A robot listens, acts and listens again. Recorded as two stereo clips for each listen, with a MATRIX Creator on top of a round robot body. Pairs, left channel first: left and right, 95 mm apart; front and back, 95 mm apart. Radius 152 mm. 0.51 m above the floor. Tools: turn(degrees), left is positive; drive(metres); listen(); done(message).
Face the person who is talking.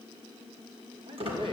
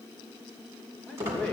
turn(degrees=-80)
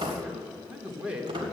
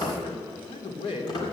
turn(degrees=-15)
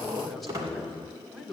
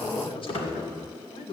done("Facing the man speaking.")